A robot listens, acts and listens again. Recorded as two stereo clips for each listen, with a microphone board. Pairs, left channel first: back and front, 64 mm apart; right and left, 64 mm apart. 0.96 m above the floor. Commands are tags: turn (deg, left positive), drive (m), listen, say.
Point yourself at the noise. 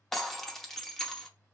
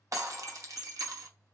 <turn deg="100"/>
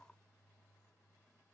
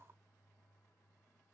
<say>I heard breaking glass from this way, but can't make it out now.</say>